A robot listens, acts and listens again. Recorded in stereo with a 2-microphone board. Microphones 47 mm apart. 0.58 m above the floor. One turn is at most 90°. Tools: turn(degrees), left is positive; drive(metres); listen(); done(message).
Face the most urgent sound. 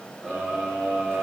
turn(degrees=-15)
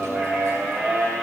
turn(degrees=-90)
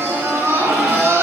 turn(degrees=-60)
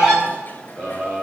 done("Facing the scream.")